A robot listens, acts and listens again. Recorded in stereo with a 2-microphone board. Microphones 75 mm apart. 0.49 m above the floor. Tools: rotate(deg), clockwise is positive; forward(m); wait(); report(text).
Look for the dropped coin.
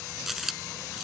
rotate(30)
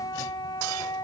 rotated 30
wait()
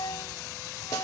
report("I heard a dropped coin, but can't make it out now. It was about 25° left or 145° right.")